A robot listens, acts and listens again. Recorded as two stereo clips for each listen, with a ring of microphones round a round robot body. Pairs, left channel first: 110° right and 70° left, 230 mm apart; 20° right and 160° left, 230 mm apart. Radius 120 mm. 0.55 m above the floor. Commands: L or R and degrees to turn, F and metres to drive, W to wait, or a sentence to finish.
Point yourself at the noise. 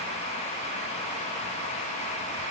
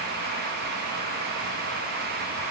W
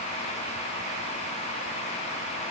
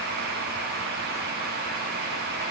W
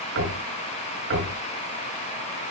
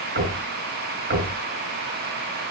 L110
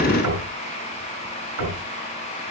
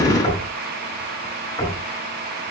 L50
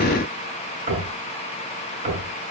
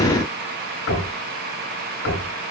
Facing the knocking, over 4 m away.